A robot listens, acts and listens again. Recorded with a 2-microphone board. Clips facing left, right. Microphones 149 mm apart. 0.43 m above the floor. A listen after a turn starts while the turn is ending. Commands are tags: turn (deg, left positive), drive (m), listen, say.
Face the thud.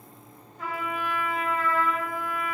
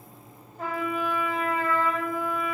<listen/>
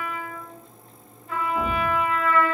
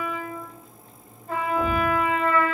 <turn deg="50"/>
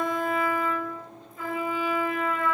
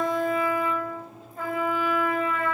<listen/>
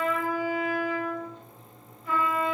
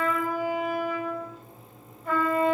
<say>I heard a thud, but can't make it out now. It was about straight ahead or 80° left.</say>